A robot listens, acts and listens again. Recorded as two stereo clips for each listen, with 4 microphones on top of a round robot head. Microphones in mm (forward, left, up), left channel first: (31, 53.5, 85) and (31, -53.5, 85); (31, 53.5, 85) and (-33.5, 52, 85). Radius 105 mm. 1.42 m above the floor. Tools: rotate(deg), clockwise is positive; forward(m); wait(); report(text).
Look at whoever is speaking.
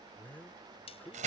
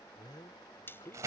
rotate(-15)
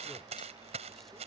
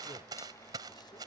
wait()
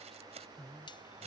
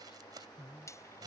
report("Found it: a man speaking, straight ahead.")